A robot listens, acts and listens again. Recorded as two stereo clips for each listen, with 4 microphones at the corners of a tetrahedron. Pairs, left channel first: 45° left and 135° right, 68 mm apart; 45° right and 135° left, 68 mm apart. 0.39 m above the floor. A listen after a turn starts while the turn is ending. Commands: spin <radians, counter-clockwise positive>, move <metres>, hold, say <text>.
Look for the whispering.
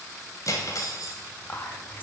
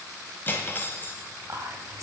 spin 1.75
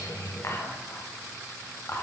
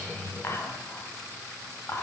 say Facing the whispering.